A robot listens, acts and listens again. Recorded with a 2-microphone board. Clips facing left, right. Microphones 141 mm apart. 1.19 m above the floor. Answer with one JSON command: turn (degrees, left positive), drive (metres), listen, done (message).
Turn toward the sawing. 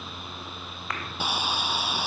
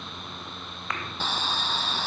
{"turn": 30}
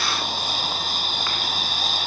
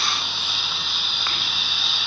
{"turn": 135}
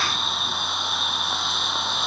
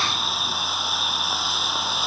{"done": "Found it: sawing, straight ahead."}